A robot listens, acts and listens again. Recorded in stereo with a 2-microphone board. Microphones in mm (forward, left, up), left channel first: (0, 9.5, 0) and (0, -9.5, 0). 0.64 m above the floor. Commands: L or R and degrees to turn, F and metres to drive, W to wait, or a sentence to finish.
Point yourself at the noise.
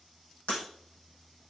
L70
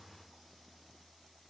W
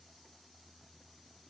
I heard breaking glass, but can't make it out now. It was about straight ahead or 40° left.